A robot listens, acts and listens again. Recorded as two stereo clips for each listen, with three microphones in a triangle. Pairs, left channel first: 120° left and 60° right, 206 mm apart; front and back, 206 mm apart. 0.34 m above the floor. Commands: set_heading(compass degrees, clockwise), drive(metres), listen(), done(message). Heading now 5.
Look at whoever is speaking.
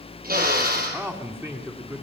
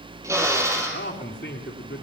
set_heading(350)
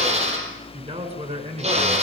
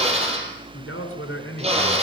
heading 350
done("Found it: a man speaking, straight ahead, over 4 m away.")